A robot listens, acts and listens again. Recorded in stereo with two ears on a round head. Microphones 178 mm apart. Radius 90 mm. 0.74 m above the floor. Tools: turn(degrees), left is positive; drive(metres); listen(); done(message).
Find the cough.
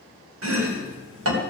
listen()
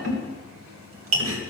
listen()
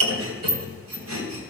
done("I can't make out a cough to turn to.")